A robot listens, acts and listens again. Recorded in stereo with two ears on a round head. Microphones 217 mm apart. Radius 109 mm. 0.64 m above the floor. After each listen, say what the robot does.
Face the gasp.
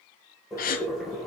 Turn 35° left.
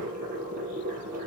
Keep listening.
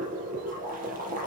I heard a gasp, but can't make it out now. It was about straight ahead or 110° left.